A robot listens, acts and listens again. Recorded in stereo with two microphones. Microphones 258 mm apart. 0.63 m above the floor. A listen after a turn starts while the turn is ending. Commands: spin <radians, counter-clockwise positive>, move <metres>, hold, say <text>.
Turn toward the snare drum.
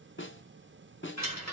spin 0.87
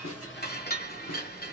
hold
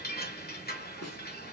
spin 1.40
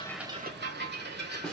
say Facing the snare drum, under 1 m away.